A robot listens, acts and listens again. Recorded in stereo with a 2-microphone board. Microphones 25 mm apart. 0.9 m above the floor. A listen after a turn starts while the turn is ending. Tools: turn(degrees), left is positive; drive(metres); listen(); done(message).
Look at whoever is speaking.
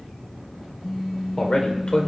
turn(degrees=35)
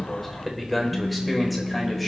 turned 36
done("Found it: a man speaking, straight ahead.")